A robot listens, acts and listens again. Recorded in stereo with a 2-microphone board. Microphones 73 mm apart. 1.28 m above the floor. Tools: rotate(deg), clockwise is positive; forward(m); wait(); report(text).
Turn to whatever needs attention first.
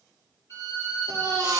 rotate(55)
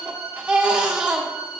rotate(20)
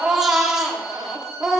report("Facing the baby crying.")